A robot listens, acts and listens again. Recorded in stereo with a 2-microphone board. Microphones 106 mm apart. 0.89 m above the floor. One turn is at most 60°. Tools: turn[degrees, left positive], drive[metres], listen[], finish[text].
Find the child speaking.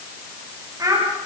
Thought: The child speaking: about 35° right or 145° right.
Action: turn[-35]
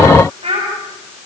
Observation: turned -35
Thought: So it is at 110° right.
Action: turn[-60]
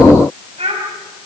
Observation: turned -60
Thought: The child speaking is now 75° right.
Action: turn[-60]
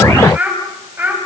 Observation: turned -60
Thought: The child speaking is now 15° right.
Action: turn[-15]
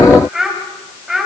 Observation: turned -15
Action: finish[Found it: a child speaking, straight ahead.]